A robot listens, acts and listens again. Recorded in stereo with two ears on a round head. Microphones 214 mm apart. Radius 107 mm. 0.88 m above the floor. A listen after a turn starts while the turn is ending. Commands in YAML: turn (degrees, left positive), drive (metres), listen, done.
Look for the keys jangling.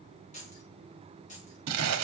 turn: 35
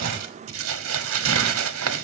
listen: true
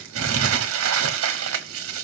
listen: true
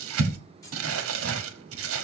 turn: 15
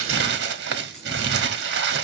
listen: true
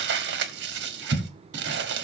listen: true
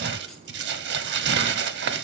done: "Facing where the keys jangling came from. I can't hear it now."